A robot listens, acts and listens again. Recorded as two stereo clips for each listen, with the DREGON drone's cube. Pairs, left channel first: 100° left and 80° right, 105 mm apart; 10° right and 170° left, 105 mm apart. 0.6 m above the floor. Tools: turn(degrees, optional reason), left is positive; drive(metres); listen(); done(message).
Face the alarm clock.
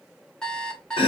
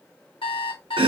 turn(degrees=20, reason="The alarm clock: 20° left.")
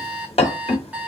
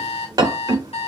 done("Found it: an alarm clock, straight ahead.")